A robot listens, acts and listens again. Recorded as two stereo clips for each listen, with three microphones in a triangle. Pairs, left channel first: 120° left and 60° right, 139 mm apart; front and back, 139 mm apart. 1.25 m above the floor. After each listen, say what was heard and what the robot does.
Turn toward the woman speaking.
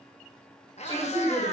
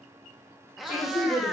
The woman speaking: 10° right. Turn 10° right.
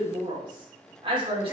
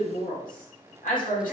The woman speaking is now 10° right. Turn 10° right.
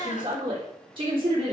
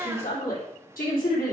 The woman speaking is now 10° right. Turn 10° right.
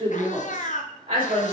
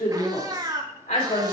The woman speaking is now 10° right. Turn 10° right.
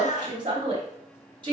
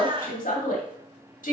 Found it: a woman speaking, straight ahead, 2 to 4 m away.